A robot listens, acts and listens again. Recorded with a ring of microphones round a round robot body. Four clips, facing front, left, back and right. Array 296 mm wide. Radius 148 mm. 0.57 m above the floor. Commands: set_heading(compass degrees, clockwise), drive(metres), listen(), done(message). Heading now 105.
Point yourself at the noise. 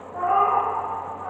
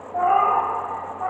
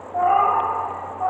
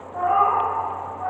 set_heading(315)
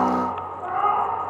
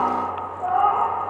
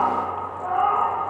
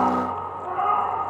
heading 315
set_heading(245)
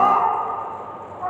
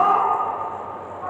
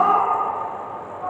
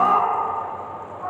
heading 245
done("Found it: a cat meowing, straight ahead.")